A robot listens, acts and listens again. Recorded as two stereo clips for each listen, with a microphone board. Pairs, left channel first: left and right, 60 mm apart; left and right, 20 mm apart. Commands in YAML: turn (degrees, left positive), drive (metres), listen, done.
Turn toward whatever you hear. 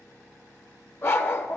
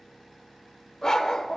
turn: 40
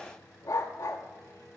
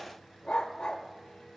turn: 95
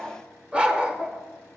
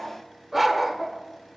turn: -20
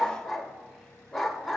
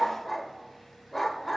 done: "Found it: a dog barking, straight ahead."